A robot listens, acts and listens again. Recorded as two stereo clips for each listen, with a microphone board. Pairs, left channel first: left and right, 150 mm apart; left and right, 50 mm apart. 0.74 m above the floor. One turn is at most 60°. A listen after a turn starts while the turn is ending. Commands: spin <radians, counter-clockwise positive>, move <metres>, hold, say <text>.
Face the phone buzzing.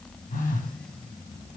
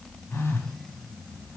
spin 1.05
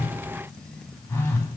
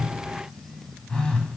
spin 0.26
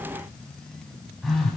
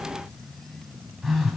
say Facing the phone buzzing.